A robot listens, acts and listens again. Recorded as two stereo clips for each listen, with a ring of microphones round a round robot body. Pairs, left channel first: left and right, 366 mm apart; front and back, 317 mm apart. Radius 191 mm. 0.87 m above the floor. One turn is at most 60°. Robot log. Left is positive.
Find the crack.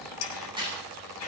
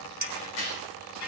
note: The crack: 15° right.
cmd yaw -15
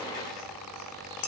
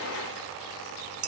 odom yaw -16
end: Facing where the crack came from. I can't hear it now.